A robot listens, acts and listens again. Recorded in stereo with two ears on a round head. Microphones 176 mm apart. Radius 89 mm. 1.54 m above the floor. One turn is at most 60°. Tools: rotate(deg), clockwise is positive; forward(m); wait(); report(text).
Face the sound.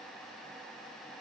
wait()
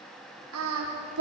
rotate(60)
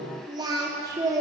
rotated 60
rotate(15)
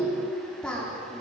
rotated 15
report("Facing the singing.")